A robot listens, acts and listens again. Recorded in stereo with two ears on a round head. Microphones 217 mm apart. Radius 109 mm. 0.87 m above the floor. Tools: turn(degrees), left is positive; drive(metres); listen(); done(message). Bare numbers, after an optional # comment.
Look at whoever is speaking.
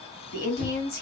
# The woman speaking: about 40° left or 140° left.
turn(40)
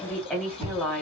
done("Found it: a woman speaking, straight ahead.")